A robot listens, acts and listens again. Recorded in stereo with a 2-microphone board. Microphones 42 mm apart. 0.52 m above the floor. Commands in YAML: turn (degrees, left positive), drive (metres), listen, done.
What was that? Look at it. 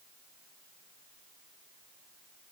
listen: true
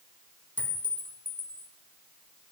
turn: 45
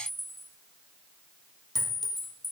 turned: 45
turn: 10
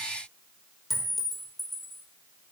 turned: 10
done: "Facing the clink, under 1 m away."